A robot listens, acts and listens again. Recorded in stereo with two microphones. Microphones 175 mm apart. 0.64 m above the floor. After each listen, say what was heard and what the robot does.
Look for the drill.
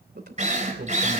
The drill: about 40° right or 140° right. Turn 40° right.
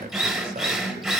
Facing the drill.